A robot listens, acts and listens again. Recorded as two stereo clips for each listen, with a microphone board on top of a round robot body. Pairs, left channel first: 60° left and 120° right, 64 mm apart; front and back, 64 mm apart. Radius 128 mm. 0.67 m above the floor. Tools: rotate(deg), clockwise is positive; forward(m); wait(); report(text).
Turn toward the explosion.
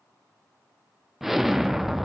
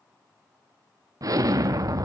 rotate(-155)
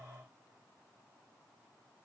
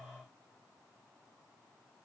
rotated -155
report("I heard an explosion from this way, but can't make it out now.")